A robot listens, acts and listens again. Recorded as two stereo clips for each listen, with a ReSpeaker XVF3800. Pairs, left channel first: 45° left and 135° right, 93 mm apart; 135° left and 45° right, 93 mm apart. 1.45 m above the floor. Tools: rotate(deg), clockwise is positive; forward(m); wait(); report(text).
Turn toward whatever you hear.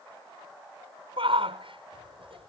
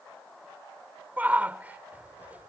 rotate(120)
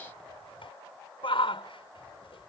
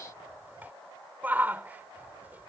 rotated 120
rotate(-25)
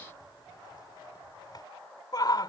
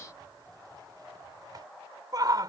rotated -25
report("Found it: a shout, straight ahead.")